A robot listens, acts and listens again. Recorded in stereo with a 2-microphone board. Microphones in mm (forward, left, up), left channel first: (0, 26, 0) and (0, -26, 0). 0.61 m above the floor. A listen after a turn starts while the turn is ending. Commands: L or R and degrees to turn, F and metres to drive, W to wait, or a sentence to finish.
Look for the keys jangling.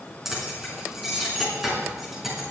R30
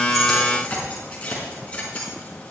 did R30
L25
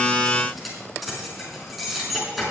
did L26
Found it: keys jangling, straight ahead.